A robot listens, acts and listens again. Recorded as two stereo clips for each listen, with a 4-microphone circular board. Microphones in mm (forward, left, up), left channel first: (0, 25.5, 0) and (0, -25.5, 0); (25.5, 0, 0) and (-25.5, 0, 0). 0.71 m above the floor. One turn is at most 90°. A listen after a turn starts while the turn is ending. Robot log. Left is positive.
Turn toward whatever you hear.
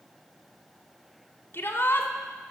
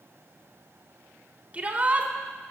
note: The shout: 120° left.
cmd yaw +90
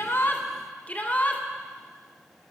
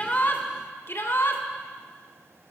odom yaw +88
note: The shout is now 35° left.
cmd yaw +35
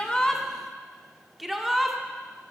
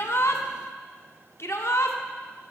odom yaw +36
end: Facing the shout.